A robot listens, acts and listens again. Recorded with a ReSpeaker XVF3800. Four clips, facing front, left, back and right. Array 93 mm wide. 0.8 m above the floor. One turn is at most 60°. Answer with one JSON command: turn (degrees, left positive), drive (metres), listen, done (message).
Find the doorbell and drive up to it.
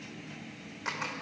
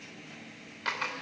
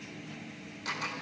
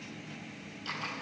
{"listen": true}
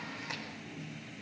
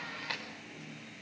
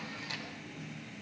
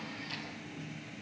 {"listen": true}
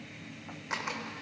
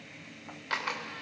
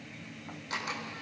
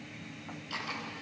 {"done": "I can't make out a doorbell to turn to."}